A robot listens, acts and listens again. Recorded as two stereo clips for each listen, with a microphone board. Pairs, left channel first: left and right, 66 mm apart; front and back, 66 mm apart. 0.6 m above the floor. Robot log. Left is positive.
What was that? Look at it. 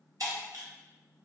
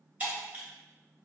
note: The breaking glass: 110° right.
cmd yaw -110
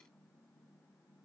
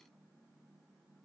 end: I heard breaking glass from this way, but can't make it out now.